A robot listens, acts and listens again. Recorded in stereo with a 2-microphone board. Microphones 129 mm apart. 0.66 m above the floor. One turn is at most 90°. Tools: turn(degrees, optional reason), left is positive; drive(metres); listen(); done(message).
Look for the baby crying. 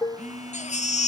turn(degrees=65, reason="The baby crying: about 65° left or 115° left.")
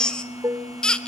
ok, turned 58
done("Found it: a baby crying, straight ahead, 1 to 2 m away.")